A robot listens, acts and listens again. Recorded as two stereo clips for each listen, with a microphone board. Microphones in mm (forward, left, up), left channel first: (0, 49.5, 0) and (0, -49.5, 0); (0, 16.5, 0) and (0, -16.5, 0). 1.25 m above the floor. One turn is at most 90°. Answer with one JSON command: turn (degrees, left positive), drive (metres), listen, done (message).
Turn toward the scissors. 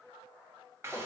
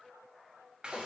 {"listen": true}
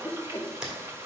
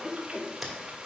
{"turn": -30}
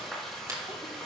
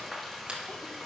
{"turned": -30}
{"listen": true}
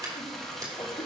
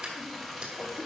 {"turn": -90}
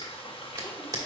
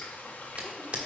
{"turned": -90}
{"turn": -50}
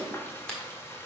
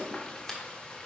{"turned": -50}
{"turn": 10}
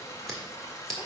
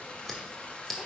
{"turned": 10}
{"done": "Facing the scissors, 1 to 2 m away."}